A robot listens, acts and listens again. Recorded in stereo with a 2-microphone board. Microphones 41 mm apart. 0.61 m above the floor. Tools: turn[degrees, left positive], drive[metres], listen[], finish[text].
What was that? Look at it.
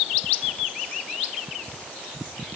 Action: listen[]
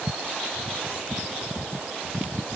Action: listen[]
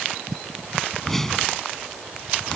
Action: turn[30]
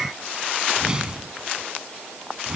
Thought: So it is at 20° right.
Action: turn[-20]
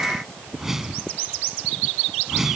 Thought: The whoosh is now 10° right.
Action: turn[-10]
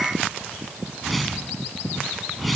Action: finish[Facing the whoosh.]